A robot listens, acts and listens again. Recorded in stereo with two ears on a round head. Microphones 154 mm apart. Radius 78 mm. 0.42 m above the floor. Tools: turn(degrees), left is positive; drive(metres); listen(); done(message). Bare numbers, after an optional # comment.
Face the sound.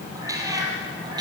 # The cat meowing: about 25° right or 155° right.
turn(-25)
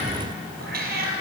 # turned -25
# So it is at 120° right.
turn(-120)
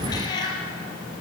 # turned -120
# The cat meowing is now 25° left.
turn(25)
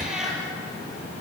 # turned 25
done("Found it: a cat meowing, straight ahead.")